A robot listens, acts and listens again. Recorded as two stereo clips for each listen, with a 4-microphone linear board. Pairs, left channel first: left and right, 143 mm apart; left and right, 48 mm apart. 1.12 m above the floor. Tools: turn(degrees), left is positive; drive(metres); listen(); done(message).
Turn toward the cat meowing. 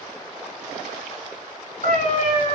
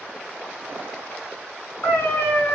turn(degrees=65)
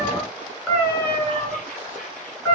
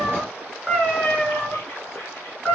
turn(degrees=15)
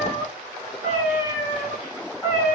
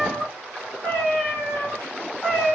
done("Found it: a cat meowing, straight ahead.")